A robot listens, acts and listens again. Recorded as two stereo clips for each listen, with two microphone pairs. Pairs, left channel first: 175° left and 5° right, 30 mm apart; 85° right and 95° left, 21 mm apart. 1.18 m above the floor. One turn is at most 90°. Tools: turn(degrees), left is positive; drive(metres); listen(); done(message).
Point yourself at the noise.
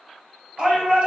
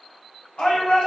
turn(degrees=-60)
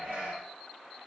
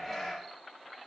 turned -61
done("Found it: a shout, straight ahead, 1 to 2 m away.")